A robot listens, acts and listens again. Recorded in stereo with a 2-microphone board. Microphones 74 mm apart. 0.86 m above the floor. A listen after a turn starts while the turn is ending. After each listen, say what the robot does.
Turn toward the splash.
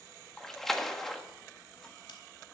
Turn 30° left.
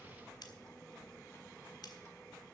Keep listening.
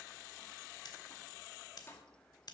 I heard a splash, but can't make it out now. It was about 25° right or 145° left.